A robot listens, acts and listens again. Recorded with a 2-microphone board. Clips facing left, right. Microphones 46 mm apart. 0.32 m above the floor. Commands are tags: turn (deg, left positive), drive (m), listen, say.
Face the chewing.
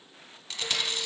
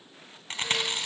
<turn deg="-40"/>
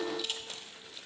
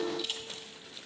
<say>Facing the chewing.</say>